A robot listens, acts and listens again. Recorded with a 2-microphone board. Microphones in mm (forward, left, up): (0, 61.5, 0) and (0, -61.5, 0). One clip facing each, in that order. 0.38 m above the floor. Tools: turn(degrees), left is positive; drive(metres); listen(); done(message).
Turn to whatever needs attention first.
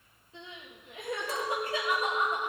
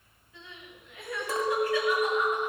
turn(degrees=30)
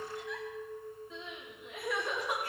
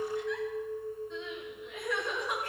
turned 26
done("Found it: crying, straight ahead.")